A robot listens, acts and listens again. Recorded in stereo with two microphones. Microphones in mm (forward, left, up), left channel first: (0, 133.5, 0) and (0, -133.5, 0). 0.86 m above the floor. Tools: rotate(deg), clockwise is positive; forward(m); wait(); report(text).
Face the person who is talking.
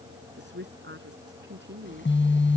rotate(45)
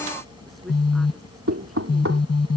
wait()
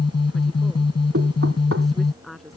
report("Facing the woman speaking.")